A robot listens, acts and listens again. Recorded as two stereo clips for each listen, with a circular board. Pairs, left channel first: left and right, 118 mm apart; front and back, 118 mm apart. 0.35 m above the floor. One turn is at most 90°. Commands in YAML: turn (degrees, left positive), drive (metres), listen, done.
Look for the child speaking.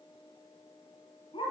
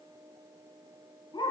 listen: true
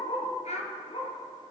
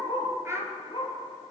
turn: 90
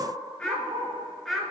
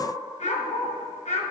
done: "Facing the child speaking."